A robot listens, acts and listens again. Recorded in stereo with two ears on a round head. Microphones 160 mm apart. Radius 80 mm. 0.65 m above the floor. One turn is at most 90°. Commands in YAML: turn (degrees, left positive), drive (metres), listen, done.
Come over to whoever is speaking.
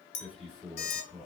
turn: 30
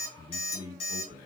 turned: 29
turn: -25
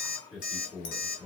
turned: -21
drive: 1.0
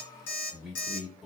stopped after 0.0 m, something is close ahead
done: "Something is in my way. I am facing the man speaking but have not reached it."